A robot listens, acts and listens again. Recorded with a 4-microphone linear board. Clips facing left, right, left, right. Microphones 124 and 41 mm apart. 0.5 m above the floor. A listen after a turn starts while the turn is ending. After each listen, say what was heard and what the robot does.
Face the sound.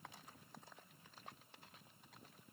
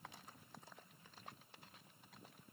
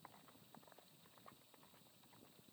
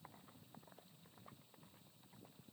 Keep listening.
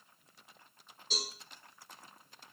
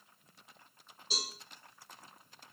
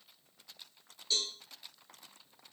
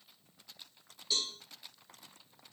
Turn 30° right.
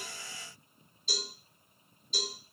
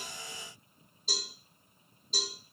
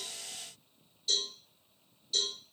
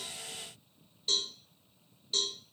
So it is at 140° right. Turn 140° right.
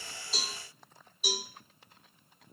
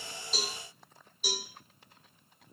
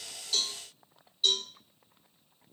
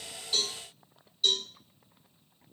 The cowbell is now 10° left. Turn 10° left.
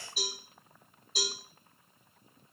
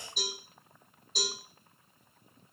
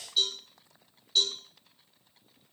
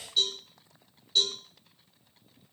Facing the cowbell, over 4 m away.